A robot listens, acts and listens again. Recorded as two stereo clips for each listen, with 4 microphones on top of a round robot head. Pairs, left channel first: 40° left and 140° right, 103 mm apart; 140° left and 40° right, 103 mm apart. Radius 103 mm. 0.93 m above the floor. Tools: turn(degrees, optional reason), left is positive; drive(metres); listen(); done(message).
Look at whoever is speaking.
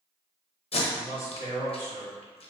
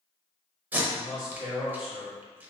turn(degrees=-120, reason="The man speaking: 120° right.")
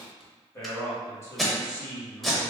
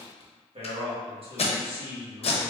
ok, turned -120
turn(degrees=-20, reason="The man speaking is now 20° right.")
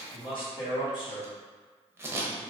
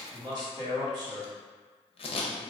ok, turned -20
done("Facing the man speaking.")